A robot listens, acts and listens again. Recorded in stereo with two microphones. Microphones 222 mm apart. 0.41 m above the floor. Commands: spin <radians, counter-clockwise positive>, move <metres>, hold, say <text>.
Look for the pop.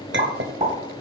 spin -0.52
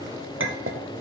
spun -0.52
hold
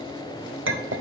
say I heard a pop, but can't make it out now. It was about straight ahead or 120° right.